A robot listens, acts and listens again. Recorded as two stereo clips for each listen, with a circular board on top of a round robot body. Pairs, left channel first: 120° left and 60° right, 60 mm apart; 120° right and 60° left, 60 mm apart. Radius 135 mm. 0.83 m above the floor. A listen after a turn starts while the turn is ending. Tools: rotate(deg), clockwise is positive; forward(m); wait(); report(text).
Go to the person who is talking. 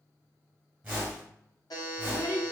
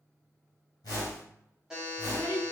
rotate(-175)
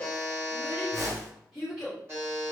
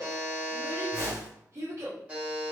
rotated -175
rotate(-25)
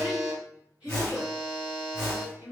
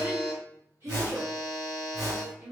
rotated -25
rotate(-10)
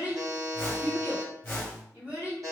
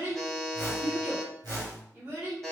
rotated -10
forward(1.0)
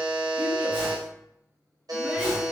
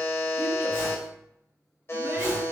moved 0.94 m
wait()
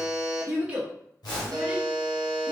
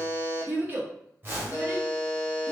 forward(1.0)
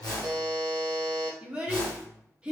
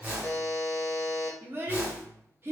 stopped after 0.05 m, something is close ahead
rotate(-10)
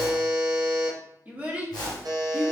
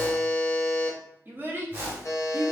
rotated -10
report("Arrived at the child speaking, straight ahead.")